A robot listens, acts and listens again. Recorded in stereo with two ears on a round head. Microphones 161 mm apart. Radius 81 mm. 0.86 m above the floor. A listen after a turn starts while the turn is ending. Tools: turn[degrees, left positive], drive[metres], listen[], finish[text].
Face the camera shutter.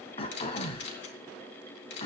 Thought: The camera shutter: about 65° left or 115° left.
Action: turn[65]
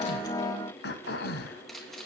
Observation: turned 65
Action: finish[Found it: a camera shutter, straight ahead.]